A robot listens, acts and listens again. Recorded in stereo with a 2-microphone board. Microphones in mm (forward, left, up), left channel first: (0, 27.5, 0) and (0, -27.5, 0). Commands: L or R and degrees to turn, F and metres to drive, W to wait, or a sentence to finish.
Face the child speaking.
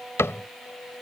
W
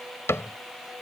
W
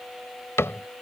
I can't make out a child speaking, only a cupboard door.